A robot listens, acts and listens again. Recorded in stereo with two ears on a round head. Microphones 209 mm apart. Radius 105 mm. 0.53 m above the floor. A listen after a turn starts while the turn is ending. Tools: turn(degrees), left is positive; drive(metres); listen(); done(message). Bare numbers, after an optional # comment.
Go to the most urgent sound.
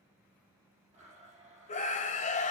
# The scream: about 30° left or 150° left.
turn(30)
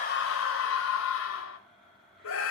# So it is at 115° left.
turn(115)
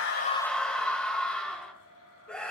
drive(1.0)
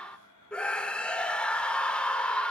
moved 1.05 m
drive(1.0)
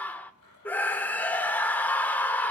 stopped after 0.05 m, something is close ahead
# The scream is now 10° left.
turn(10)
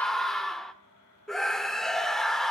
done("Arrived at the scream, straight ahead.")